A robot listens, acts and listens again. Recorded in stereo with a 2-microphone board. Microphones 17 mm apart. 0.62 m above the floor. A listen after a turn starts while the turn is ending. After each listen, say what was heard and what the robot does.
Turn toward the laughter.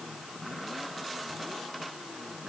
Keep listening.
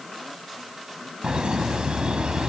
The laughter: about 65° right or 115° right. Turn 65° right.
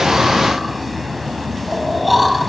Found it: laughter, straight ahead, over 4 m away.